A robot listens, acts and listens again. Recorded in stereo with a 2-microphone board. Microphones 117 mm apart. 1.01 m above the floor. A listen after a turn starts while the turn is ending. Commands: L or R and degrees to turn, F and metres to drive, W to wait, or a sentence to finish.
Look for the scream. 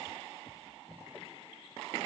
W
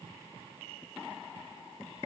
W
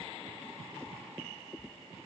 I can't make out a scream.